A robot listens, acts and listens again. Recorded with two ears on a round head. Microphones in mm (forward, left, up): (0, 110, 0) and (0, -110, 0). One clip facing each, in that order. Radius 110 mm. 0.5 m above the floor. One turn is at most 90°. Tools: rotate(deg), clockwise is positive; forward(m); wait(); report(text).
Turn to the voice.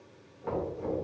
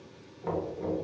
wait()
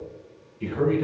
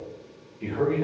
rotate(-30)
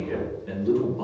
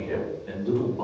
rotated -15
report("Found it: a man speaking, straight ahead, 1 to 2 m away.")